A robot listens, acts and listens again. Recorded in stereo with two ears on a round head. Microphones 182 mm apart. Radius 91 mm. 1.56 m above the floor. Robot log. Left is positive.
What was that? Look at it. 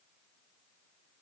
cmd idle
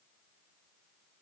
cmd idle
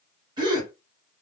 note: The gasp: about 20° right or 160° right.
cmd yaw -20
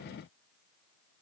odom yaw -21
cmd idle
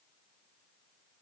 end: I heard a gasp, but can't make it out now. It was about straight ahead or 135° right.